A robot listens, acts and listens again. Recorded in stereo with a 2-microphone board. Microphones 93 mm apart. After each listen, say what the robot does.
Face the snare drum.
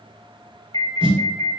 Turn 65° right.
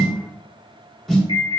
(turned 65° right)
Found it: a snare drum, straight ahead.